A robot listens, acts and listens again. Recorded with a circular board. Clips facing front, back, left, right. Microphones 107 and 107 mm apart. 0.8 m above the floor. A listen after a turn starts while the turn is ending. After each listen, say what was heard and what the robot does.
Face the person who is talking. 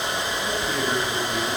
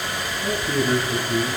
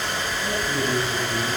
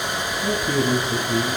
The man speaking: 95° right. Turn 95° right.
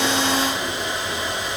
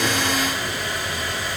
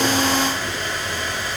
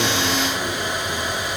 Keep listening.
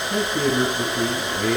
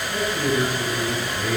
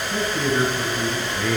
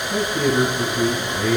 The man speaking is now 15° right. Turn 15° right.
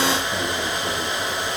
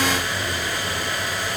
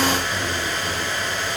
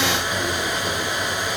Keep listening.
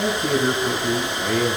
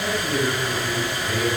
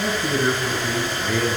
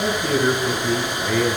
Found it: a man speaking, straight ahead.